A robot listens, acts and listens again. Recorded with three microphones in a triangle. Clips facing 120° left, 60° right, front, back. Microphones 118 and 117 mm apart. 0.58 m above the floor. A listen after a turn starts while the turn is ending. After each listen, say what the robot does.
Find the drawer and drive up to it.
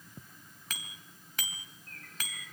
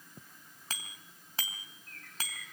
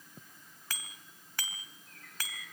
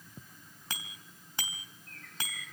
Keep listening.
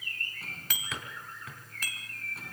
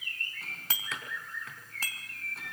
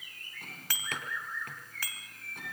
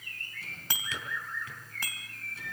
Turn 30° left.
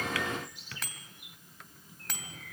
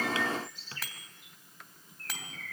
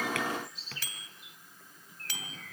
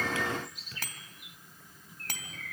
Drive 1.0 m forward.
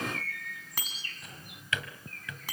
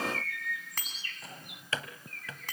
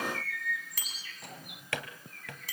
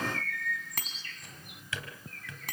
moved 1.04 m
Turn 10° right.
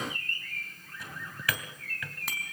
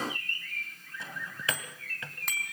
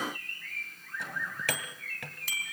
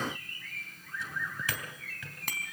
Drive 1.0 m forward.
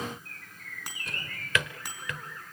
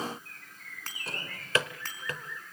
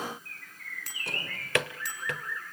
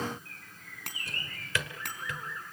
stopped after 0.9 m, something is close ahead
Turn 10° right.
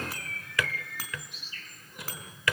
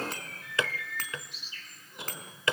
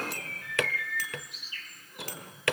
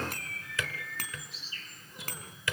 Arrived at the drawer, straight ahead.